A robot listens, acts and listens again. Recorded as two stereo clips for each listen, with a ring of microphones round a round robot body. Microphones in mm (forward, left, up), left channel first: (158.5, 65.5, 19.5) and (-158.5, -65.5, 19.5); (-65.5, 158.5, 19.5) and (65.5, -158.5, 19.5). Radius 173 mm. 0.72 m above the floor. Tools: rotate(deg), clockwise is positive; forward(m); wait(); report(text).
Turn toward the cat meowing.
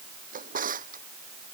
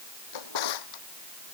wait()
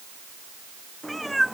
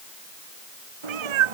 rotate(65)
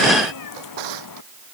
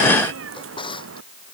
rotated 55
rotate(15)
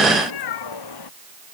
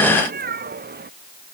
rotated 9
report("Found it: a cat meowing, straight ahead.")